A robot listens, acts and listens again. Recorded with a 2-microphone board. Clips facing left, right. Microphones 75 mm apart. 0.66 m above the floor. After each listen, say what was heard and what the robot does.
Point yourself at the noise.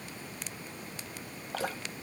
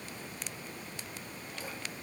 Turn 90° left.
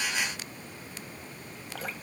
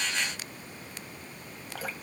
Found it: dripping, straight ahead, 1 to 2 m away.